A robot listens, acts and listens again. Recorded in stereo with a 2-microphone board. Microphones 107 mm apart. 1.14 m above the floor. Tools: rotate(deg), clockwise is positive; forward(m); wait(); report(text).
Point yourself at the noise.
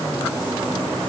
wait()
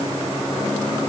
wait()
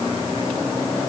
report("I can't make out anything to turn to.")